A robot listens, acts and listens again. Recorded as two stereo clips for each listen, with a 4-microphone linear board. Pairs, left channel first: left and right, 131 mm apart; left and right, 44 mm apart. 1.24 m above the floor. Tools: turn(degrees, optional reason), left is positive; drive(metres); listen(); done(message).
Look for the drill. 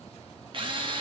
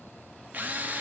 turn(degrees=-40, reason="The drill: about 40° right or 140° right.")
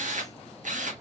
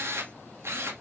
turn(degrees=-100, reason="So it is at 100° right.")
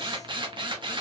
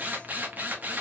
turn(degrees=-40, reason="The drill is now 40° right.")
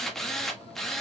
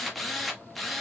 done("Facing the drill.")